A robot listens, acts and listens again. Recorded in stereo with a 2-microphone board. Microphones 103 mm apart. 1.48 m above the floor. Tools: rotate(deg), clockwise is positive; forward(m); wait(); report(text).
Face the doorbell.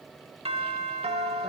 rotate(75)
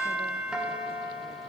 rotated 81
rotate(10)
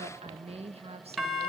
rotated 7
report("Found it: a doorbell, straight ahead, 2 to 4 m away.")